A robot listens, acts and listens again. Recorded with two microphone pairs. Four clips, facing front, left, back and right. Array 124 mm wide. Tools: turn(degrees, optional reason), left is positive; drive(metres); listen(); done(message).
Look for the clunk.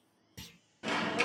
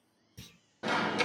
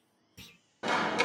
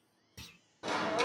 turn(degrees=-25, reason="The clunk: 25° right.")
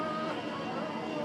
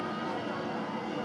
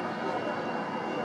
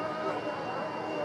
done("Facing where the clunk came from. I can't hear it now.")